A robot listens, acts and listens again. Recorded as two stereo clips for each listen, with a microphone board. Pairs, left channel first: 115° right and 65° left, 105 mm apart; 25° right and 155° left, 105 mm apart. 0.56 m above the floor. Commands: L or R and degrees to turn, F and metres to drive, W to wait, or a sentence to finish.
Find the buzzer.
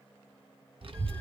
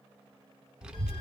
W
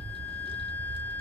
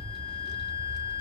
W
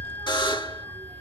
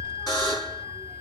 R75
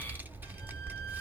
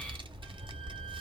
W
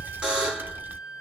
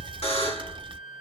R15
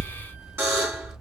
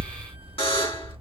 Found it: a buzzer, straight ahead, 1 to 2 m away.